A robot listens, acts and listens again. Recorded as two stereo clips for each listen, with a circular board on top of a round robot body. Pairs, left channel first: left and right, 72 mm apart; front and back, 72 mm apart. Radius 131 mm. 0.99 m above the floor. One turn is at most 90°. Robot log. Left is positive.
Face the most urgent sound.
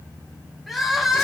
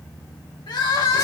end: Facing the crying.